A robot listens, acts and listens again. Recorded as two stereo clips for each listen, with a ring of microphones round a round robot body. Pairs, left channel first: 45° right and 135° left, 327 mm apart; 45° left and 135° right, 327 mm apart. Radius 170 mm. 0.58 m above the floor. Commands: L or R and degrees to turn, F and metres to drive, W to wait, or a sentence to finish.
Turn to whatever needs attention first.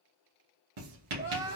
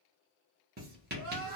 R150
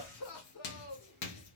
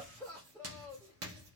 R40
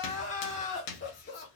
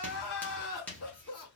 Found it: crying, straight ahead, 2 to 4 m away.